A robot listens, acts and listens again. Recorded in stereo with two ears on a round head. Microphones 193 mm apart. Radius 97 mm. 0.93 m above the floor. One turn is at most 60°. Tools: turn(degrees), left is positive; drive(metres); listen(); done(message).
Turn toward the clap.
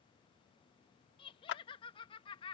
turn(degrees=60)
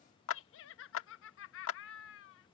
turn(degrees=60)
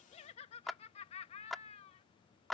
done("Found it: a clap, straight ahead.")